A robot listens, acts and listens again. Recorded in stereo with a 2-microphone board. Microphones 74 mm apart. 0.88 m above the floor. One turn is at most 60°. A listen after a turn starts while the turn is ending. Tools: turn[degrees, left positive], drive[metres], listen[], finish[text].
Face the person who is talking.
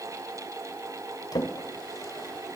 Action: listen[]
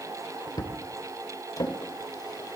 Action: listen[]
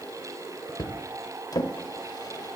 Action: finish[I can't make out anyone speaking, only a drawer.]